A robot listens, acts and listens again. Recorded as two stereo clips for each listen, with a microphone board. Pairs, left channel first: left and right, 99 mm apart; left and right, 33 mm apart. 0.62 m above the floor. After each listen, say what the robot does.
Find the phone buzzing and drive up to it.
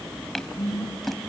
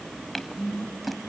Turn 40° left.
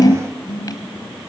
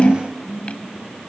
Turn 95° left.
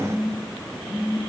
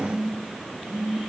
Drive 1.0 m forward.
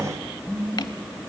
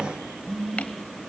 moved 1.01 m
Turn 10° right.
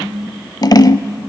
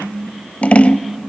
Drive 1.0 m forward.
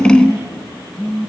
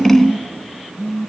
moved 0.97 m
Drive 1.0 m forward.
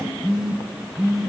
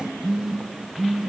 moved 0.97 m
Turn 10° right.
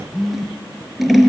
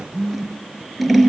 Drive 1.0 m forward.
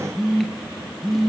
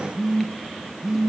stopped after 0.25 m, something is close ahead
I am next to the phone buzzing.